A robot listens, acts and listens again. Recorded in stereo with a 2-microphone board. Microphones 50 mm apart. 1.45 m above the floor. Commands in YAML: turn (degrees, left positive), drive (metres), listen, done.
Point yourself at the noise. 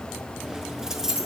turn: -30
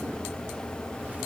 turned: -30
listen: true
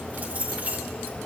turn: -145
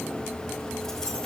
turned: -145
listen: true
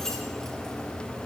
listen: true
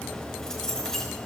turn: 10
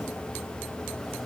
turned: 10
listen: true
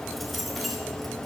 listen: true
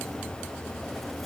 done: "Facing where the keys jangling came from. I can't hear it now."